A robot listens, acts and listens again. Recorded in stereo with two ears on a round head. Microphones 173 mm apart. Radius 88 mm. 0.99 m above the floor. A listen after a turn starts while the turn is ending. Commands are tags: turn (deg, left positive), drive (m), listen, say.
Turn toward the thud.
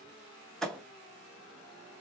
<turn deg="30"/>
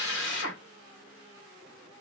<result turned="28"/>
<listen/>
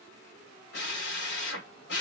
<say>I heard a thud, but can't make it out now. It was about 25° right or 150° left.</say>